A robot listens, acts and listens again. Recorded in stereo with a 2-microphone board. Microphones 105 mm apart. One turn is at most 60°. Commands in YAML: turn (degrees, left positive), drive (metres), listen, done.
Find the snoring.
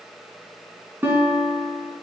listen: true
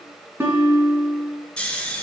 turn: 30
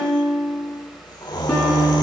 turn: 60
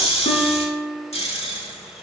turn: 60
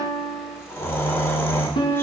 turn: 25
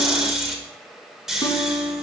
done: "Found it: snoring, straight ahead, 1 to 2 m away."